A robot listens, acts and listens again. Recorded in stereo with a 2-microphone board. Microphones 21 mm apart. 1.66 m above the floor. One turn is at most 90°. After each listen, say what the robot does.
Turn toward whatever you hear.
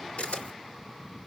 Turn 70° left.
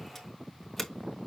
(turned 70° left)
Found it: a camera shutter, straight ahead, 2 to 4 m away.